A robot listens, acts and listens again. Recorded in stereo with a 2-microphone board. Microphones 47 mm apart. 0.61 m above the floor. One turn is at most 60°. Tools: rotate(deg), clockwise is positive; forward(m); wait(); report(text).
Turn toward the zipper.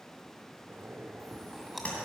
rotate(55)
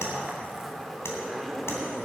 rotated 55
report("Found it: a zipper, straight ahead.")